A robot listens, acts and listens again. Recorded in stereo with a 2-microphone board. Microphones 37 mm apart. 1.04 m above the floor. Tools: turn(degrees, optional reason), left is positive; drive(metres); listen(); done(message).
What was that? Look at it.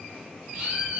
turn(degrees=-35, reason="The bird: about 35° right or 145° right.")
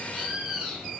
done("Found it: a bird, straight ahead.")